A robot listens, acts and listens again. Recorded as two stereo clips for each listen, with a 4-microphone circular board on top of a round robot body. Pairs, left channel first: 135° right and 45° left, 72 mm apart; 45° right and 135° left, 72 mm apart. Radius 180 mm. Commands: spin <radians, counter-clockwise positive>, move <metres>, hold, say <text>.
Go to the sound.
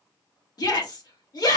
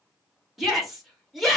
spin -2.44
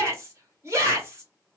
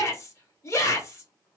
move 1.0
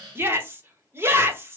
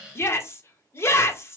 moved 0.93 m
move 1.0
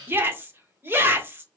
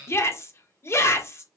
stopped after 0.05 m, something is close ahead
say I am next to the shout.